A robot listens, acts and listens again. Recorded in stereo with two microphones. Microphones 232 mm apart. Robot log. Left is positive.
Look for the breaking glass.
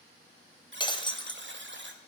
note: The breaking glass: about 20° left or 160° left.
cmd yaw +20
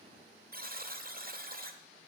cmd idle
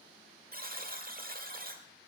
end: I heard breaking glass, but can't make it out now. It was about straight ahead or 140° left.